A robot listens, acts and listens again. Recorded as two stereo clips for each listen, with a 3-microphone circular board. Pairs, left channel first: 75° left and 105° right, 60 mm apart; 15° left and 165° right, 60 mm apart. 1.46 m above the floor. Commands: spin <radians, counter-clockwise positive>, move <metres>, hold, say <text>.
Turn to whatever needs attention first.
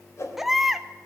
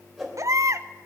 spin 2.97
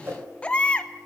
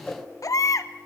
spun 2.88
say Found it: a baby crying, straight ahead.